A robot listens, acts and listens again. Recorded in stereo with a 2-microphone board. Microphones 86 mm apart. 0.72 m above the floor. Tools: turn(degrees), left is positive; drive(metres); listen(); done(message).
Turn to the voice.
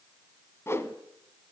listen()
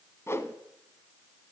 listen()
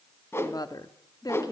turn(degrees=45)
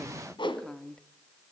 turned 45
turn(degrees=10)
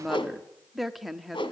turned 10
done("Found it: a woman speaking, straight ahead, 1 to 2 m away.")